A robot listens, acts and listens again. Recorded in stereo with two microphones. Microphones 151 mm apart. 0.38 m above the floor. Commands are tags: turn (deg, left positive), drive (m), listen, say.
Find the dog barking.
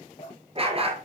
<turn deg="-40"/>
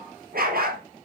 <turn deg="-95"/>
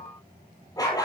<turn deg="25"/>
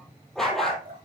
<say>Facing the dog barking, over 4 m away.</say>